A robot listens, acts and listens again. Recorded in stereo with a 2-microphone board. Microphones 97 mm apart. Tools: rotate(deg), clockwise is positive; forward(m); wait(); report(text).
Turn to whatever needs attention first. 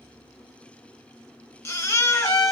rotate(-30)
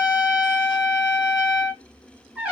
wait()
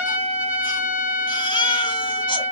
rotate(-125)
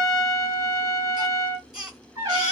report("Found it: a baby crying, straight ahead.")